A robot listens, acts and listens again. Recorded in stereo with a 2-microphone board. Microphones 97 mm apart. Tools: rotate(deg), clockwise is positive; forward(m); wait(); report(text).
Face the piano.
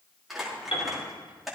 rotate(-70)
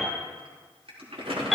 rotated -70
report("Found it: a piano, straight ahead.")